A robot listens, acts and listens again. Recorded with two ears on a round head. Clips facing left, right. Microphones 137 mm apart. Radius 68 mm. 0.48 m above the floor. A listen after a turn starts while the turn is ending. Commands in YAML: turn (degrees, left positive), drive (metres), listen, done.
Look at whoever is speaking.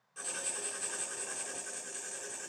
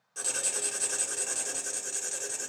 listen: true
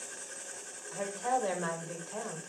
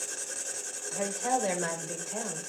turn: -20
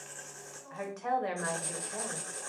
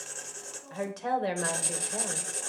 turn: -135
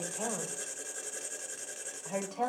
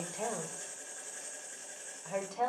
done: "Found it: a woman speaking, straight ahead, 1 to 2 m away."